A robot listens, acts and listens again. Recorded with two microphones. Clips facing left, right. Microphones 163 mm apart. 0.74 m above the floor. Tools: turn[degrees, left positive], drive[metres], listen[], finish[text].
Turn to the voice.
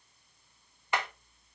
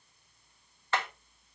Action: listen[]
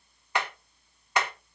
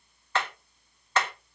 Action: listen[]
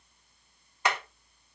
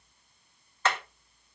Action: finish[I can't make out anyone speaking, only hammering.]